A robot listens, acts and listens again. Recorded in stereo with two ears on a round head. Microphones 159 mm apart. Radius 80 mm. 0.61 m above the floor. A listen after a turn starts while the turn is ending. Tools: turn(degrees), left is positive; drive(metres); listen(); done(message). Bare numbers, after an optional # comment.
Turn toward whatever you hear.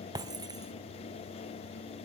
# The breaking glass: about 20° right or 160° right.
turn(-20)
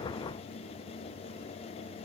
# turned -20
listen()
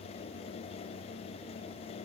done("I heard breaking glass, but can't make it out now. It was about straight ahead or 140° right.")